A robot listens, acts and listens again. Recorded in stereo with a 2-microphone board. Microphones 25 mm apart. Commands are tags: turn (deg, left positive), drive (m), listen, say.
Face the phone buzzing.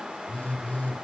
<turn deg="70"/>
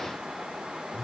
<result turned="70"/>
<say>Facing the phone buzzing, 2 to 4 m away.</say>